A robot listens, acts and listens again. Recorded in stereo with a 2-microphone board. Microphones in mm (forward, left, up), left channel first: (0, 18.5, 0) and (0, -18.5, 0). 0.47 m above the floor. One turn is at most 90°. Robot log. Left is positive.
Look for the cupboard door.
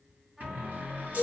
note: The cupboard door: about 55° right or 125° right.
cmd yaw -55
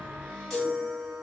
cmd idle
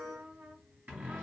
note: So it is at 70° right.
cmd yaw -70
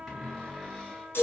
end: Found it: a cupboard door, straight ahead, 2 to 4 m away.